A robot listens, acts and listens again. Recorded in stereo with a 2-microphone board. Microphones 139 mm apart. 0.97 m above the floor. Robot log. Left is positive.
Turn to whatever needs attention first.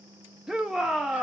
cmd yaw -30
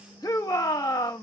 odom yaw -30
note: So it is at 25° left.
cmd yaw +25
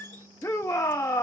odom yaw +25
note: The shout is now 20° left.
cmd yaw +20
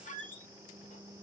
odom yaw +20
cmd idle
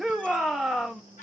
end: Facing the shout, under 1 m away.